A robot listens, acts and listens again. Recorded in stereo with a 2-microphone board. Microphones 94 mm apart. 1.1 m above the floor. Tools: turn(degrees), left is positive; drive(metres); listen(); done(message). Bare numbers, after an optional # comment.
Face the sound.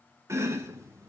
# The chopping: about 30° right or 150° right.
turn(-30)
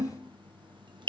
# So it is at 120° right.
turn(-120)
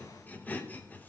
# The chopping is now 20° left.
turn(20)
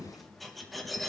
done("Facing the chopping.")